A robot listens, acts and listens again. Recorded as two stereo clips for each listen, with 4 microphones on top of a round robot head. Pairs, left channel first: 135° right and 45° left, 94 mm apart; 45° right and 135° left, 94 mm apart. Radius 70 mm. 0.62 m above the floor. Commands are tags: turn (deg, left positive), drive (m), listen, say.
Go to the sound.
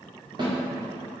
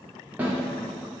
<turn deg="65"/>
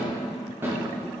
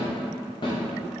<turn deg="-20"/>
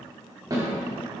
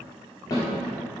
<drive m="1.0"/>
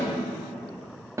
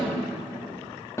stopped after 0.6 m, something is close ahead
<say>I am next to the snare drum.</say>